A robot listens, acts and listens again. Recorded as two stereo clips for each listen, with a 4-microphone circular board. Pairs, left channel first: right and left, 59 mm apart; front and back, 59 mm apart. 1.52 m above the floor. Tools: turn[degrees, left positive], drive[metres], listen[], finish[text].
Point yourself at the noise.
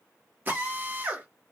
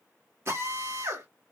Thought: The drill: 145° left.
Action: turn[145]
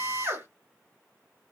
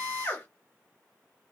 Thought: The drill is now 50° left.
Action: turn[50]
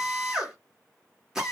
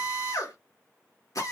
Thought: The drill is now 10° left.
Action: turn[10]
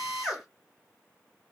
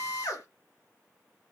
Action: finish[Found it: a drill, straight ahead.]